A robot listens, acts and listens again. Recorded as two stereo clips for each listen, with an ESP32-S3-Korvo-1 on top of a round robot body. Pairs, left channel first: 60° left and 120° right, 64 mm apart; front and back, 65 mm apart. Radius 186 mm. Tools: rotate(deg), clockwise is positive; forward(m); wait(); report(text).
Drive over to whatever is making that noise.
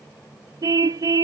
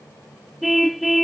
rotate(90)
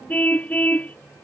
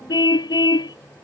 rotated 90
rotate(10)
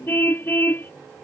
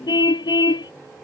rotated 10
forward(1.0)
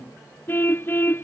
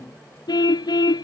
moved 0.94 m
forward(1.0)
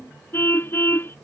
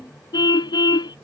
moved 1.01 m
forward(1.0)
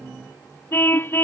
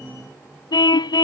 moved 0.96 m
forward(1.0)
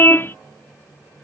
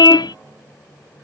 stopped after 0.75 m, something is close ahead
report("Arrived at the car horn, straight ahead.")